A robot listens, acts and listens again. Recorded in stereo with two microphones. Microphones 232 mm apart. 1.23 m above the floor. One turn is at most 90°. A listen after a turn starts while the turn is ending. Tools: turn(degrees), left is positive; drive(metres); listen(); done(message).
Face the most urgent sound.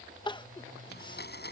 turn(degrees=20)
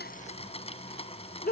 turn(degrees=90)
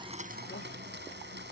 turn(degrees=50)
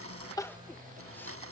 listen()
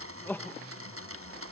turn(degrees=10)
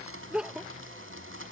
done("Found it: crying, straight ahead.")